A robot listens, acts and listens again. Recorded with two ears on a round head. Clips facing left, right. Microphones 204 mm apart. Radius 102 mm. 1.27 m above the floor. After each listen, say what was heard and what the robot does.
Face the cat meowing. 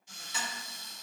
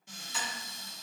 Keep listening.
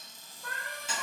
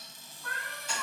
The cat meowing: about 50° left or 130° left. Turn 50° left.
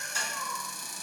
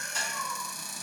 So it is at 25° left. Turn 25° left.
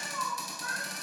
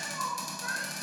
The cat meowing is now 20° right. Turn 20° right.
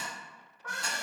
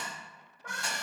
The cat meowing is now 25° right. Turn 25° right.
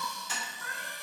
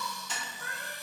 The cat meowing is now 30° right. Turn 30° right.
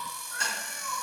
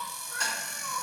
The cat meowing is now 20° right. Turn 20° right.
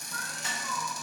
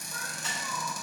The cat meowing is now 10° right. Turn 10° right.
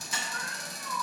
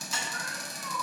Found it: a cat meowing, straight ahead.